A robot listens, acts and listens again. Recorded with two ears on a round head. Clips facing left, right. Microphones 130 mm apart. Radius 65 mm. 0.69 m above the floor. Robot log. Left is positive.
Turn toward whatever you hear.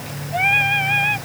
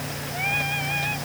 note: The singing: about 70° left or 110° left.
cmd yaw +70
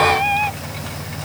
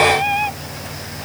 end: Found it: singing, straight ahead.